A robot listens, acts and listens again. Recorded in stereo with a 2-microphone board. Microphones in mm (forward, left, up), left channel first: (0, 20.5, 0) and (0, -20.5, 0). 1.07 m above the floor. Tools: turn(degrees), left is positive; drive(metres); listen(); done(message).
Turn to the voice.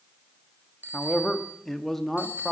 turn(degrees=30)
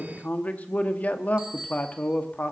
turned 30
turn(degrees=145)
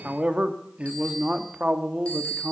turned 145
turn(degrees=-30)
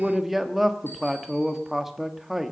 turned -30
done("Facing the man speaking, 1 to 2 m away.")